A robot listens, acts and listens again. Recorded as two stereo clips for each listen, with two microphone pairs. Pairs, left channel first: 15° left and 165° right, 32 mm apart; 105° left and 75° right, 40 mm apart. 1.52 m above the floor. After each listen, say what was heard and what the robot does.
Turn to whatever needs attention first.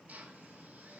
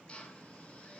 Keep listening.
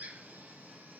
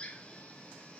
Keep listening.
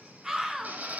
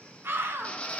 The scream: 90° right. Turn 90° right.
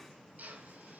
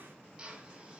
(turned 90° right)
Keep listening.
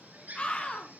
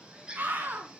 The scream is now 35° right. Turn 35° right.
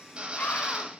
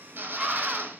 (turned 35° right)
Facing the scream, 2 to 4 m away.